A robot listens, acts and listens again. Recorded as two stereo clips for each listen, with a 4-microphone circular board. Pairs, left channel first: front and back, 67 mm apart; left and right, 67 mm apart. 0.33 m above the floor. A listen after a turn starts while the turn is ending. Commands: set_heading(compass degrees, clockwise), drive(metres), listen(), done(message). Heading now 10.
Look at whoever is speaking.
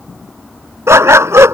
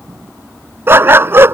listen()
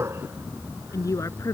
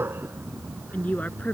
set_heading(345)
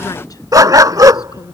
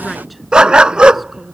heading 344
done("Facing the woman speaking.")